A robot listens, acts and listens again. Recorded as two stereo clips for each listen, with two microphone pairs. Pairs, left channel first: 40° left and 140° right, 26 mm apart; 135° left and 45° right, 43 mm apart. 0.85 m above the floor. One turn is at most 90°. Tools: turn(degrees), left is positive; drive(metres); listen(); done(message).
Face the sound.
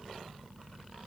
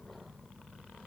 listen()
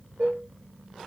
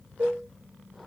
turn(degrees=-90)
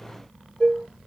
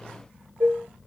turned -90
turn(degrees=-20)
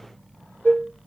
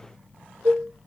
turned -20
turn(degrees=-10)
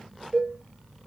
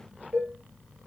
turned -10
done("Found it: dishes clattering, straight ahead, 1 to 2 m away.")